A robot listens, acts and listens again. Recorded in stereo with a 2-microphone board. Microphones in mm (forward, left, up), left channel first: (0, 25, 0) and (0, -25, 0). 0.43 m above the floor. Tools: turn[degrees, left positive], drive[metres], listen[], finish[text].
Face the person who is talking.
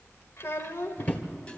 Thought: The child speaking: about 60° left or 120° left.
Action: turn[60]
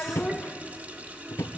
Thought: So it is at 40° left.
Action: turn[40]
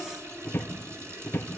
Action: listen[]
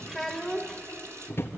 Action: finish[Found it: a child speaking, straight ahead.]